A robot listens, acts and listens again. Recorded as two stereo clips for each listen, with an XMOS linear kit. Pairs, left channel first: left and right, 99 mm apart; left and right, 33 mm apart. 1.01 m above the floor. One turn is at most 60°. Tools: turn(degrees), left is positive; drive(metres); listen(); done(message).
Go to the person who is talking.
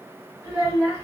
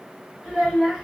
turn(degrees=-30)
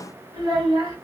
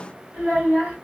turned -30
turn(degrees=-60)
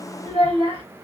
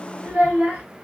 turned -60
turn(degrees=-55)
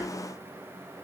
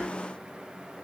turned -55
listen()
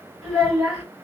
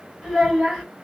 drive(metres=1.0)
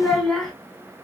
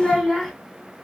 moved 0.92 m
drive(metres=1.0)
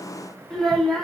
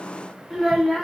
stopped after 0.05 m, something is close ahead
done("Arrived at the child speaking, straight ahead.")